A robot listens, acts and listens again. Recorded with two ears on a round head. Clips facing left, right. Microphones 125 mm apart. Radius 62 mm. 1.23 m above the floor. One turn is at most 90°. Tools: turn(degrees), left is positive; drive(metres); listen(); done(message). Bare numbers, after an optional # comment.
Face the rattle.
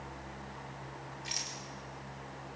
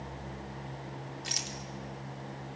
# The rattle: about 60° right or 120° right.
turn(-60)
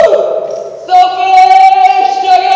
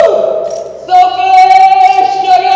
listen()
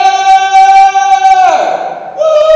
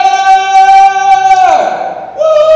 listen()
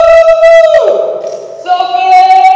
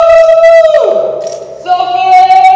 done("I heard a rattle, but can't make it out now. It was about straight ahead or 60° right.")